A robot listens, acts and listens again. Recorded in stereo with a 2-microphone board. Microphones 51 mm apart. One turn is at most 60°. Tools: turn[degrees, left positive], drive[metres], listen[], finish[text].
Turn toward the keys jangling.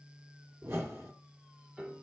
Action: listen[]
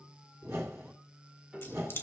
Thought: The keys jangling: about 45° left or 135° left.
Action: turn[45]
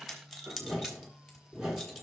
Action: finish[Facing the keys jangling, 2 to 4 m away.]